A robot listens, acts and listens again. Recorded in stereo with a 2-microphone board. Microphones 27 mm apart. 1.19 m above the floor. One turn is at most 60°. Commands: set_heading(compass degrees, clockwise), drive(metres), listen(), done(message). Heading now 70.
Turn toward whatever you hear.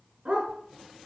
set_heading(120)
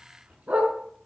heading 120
set_heading(180)
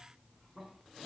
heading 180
set_heading(200)
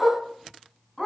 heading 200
set_heading(190)
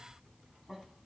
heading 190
listen()
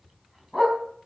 done("Found it: a dog barking, straight ahead.")